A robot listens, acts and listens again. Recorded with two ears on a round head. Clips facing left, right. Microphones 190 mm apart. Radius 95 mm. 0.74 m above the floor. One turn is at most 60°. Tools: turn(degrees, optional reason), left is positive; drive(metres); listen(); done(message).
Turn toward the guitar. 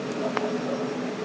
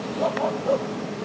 listen()
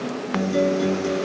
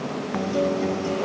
turn(degrees=25, reason="The guitar: about 25° left or 155° left.")
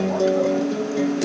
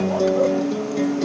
done("Facing the guitar.")